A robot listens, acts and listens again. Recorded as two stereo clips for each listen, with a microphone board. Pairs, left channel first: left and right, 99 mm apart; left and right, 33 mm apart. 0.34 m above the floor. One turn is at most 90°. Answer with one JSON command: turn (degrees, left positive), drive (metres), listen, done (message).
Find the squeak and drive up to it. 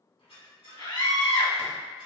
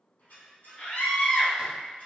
{"turn": 70}
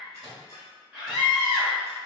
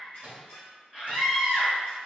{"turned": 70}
{"turn": 35}
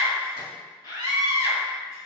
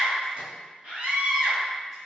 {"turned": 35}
{"listen": true}
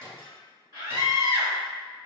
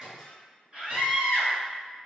{"listen": true}
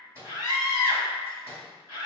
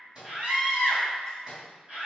{"done": "I heard a squeak from this way, but can't make it out now. I did not reach it."}